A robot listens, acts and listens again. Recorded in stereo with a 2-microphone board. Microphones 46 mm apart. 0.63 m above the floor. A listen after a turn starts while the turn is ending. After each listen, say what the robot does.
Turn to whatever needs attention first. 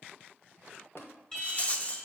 Turn 30° left.
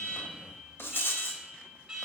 Turn 15° right.
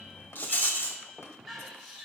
Found it: an alarm, straight ahead.